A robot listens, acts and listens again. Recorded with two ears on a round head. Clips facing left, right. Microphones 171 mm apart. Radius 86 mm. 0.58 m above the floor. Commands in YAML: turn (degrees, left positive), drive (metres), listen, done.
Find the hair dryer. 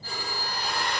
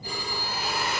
turn: -30
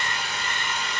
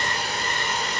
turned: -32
turn: -145
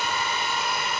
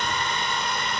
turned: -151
done: "Found it: a hair dryer, straight ahead."